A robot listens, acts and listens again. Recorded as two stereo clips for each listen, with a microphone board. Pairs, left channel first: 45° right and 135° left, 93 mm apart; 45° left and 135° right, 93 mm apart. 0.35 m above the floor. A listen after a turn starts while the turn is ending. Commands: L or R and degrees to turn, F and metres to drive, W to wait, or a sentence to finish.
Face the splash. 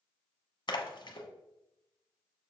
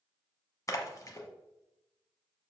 R10
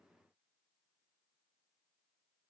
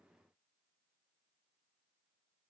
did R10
Facing where the splash came from. I can't hear it now.